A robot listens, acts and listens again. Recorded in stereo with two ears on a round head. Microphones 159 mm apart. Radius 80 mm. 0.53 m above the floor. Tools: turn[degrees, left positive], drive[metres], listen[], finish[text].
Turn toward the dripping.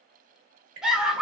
Thought: The dripping: about 40° right or 140° right.
Action: turn[-40]
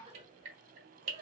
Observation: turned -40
Thought: So it is at 100° right.
Action: turn[-100]
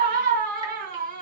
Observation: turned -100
Action: listen[]
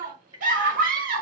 Thought: The dripping is now 25° right.
Action: turn[-25]
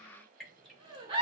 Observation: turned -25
Action: finish[Facing the dripping.]